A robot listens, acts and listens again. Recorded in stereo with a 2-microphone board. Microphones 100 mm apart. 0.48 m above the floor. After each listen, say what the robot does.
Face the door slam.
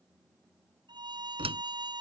Turn 90° right.
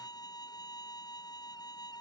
Facing where the door slam came from. I can't hear it now.